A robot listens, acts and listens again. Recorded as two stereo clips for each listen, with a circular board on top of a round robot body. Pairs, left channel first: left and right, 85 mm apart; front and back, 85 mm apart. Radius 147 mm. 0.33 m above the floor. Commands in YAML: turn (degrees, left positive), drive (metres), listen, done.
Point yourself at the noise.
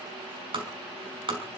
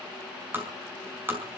turn: -115
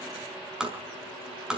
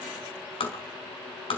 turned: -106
done: "Found it: tapping, straight ahead."